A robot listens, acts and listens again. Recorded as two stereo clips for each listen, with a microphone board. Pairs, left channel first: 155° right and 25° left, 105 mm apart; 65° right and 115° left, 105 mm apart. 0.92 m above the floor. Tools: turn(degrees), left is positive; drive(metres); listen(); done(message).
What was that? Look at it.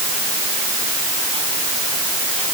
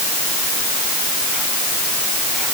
listen()
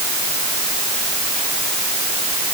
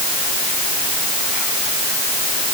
listen()
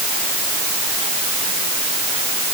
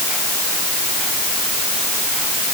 done("I can't make out anything to turn to.")